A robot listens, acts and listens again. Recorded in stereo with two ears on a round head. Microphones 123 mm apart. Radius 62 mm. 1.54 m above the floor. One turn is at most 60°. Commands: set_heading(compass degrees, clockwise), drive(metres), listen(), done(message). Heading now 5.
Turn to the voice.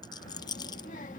set_heading(305)
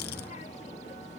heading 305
set_heading(255)
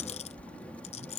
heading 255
set_heading(245)
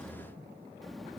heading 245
done("Facing the child speaking.")